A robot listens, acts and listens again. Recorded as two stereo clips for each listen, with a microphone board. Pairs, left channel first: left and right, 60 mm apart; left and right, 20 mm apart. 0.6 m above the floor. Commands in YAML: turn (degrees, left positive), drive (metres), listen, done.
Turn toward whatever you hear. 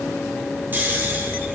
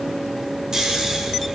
turn: -35
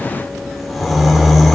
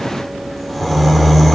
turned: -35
done: "Found it: snoring, straight ahead, 1 to 2 m away."